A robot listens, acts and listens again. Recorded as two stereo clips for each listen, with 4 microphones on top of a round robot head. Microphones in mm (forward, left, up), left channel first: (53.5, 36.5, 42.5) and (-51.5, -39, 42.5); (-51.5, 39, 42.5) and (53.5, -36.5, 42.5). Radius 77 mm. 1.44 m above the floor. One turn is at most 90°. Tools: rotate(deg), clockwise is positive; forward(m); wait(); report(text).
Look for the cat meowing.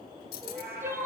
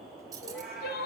rotate(90)
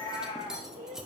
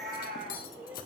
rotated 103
rotate(15)
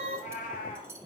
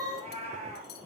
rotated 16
report("Facing the cat meowing, over 4 m away.")